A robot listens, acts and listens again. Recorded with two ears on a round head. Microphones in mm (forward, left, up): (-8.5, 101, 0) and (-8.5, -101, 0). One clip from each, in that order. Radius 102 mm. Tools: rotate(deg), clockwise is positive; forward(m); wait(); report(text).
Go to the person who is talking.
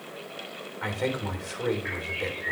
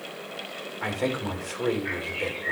rotate(-30)
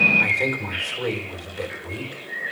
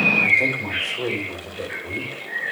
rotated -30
rotate(-145)
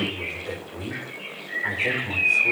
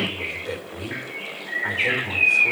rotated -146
forward(1.0)
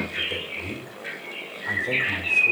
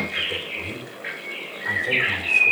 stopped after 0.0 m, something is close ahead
report("Blocked. The man speaking is further on, straight ahead.")